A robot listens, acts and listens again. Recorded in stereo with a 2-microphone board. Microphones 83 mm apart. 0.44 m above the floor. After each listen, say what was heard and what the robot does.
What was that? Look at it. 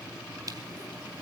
Keep listening.
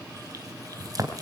The crushing: about 45° right or 135° right. Turn 45° right.
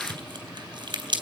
So it is at 80° right. Turn 80° right.
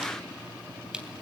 The crushing is now 10° right. Turn 10° right.
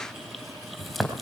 Found it: crushing, straight ahead.